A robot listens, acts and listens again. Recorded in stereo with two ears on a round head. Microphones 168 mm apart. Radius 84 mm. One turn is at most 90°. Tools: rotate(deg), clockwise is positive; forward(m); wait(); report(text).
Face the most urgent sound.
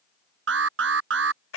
rotate(75)
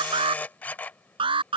rotate(25)
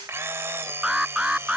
report("Found it: an alarm, straight ahead.")